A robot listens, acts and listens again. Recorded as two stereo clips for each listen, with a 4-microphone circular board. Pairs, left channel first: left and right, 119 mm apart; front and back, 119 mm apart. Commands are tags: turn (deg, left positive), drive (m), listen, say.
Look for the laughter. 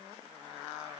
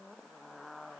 <listen/>
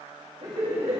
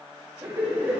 <turn deg="-110"/>
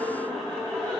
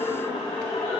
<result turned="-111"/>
<turn deg="15"/>
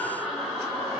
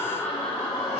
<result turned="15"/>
<say>Facing the laughter.</say>